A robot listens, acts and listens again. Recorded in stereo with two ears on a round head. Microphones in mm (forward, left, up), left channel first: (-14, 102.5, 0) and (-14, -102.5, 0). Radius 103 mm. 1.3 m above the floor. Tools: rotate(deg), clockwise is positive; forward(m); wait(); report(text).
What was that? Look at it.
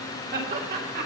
rotate(45)
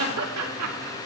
rotate(80)
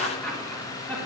rotate(-10)
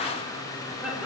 wait()
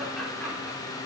wait()
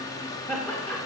report("Found it: laughter, straight ahead, 2 to 4 m away.")